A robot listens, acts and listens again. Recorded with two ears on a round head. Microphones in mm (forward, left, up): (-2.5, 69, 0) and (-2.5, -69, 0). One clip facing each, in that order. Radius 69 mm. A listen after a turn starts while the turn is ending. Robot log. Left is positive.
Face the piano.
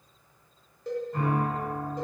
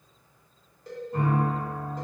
cmd yaw -30
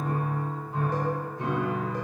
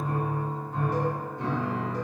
note: So it is at 15° left.
cmd yaw +15
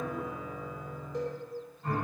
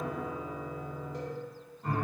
end: Found it: a piano, straight ahead, 1 to 2 m away.